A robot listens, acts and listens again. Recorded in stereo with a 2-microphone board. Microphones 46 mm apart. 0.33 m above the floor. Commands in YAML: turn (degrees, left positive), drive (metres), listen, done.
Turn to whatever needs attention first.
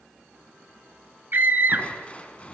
turn: -45
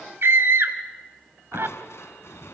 turn: -80
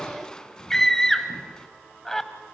turn: 15
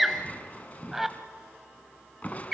done: "Facing the scream."